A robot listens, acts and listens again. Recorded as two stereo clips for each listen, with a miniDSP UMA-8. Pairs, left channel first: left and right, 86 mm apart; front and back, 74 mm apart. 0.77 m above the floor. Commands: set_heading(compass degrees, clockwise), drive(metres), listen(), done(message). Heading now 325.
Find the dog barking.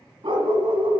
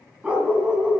set_heading(70)
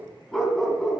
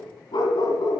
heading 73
done("Found it: a dog barking, straight ahead.")